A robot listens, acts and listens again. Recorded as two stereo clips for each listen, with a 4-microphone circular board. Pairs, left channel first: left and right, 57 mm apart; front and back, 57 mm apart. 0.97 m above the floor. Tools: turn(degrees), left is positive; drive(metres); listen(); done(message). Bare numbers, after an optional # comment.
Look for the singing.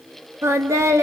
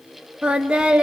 # The singing: 110° right.
turn(-110)
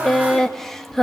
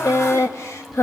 done("Facing the singing, 1 to 2 m away.")